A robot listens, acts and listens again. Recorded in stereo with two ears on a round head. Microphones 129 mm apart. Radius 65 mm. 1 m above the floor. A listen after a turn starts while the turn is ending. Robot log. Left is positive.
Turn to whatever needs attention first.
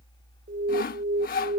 note: The alarm: about 70° right or 110° right.
cmd yaw -70
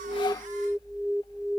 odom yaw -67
end: Facing the alarm.